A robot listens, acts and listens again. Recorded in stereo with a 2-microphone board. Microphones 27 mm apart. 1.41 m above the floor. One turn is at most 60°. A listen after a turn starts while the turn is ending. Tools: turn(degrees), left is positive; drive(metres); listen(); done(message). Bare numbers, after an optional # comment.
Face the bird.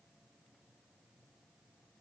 listen()
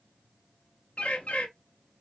# The bird: about 55° left or 125° left.
turn(55)
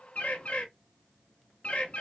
# So it is at 65° left.
turn(60)
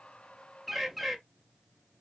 done("Found it: a bird, straight ahead.")